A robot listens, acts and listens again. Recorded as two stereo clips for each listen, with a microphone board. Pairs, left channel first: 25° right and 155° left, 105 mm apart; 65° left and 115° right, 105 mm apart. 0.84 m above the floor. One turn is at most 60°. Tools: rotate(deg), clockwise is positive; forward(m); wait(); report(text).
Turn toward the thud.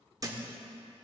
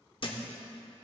rotate(-60)
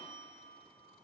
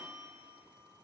rotate(-45)
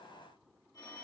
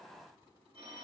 report("Facing where the thud came from. I can't hear it now.")